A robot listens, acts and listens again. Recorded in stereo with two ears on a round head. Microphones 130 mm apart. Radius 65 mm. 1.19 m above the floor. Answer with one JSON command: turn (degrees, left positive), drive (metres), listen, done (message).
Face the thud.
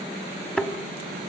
{"turn": 30}
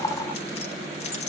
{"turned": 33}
{"listen": true}
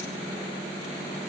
{"done": "I heard a thud, but can't make it out now. It was about 25° right or 140° left."}